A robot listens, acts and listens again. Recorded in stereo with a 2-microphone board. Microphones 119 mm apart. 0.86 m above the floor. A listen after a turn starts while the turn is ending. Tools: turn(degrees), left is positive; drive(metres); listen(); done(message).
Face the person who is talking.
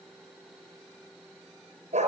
listen()
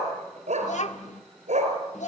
turn(degrees=90)
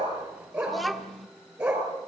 done("Found it: a child speaking, straight ahead.")